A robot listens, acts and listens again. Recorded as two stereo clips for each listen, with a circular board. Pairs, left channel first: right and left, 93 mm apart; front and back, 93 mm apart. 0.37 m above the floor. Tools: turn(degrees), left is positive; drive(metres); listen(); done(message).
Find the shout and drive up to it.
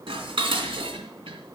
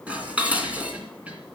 listen()
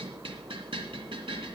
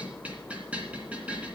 listen()
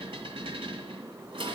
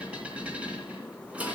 done("I can't make out a shout, only dishes clattering.")